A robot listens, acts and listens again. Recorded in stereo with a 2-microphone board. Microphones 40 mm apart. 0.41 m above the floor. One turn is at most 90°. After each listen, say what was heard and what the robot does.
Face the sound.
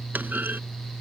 The clunk: about 60° right or 120° right. Turn 60° right.
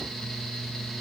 Keep listening.
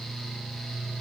I heard a clunk, but can't make it out now. It was about straight ahead or 60° right.